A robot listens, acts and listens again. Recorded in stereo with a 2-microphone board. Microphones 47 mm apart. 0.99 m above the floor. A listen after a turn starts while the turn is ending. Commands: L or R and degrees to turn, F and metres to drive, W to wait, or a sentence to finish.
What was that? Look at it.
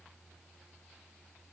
W
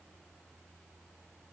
W
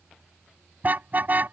R40
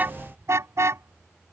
R100
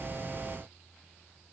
W
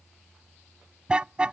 R20
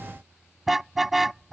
Facing the car horn.